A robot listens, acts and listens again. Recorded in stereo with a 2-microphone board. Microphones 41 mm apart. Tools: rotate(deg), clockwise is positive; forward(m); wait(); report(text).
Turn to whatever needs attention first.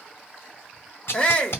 rotate(-20)
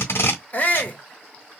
rotate(-135)
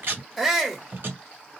report("Facing the shout, 1 to 2 m away.")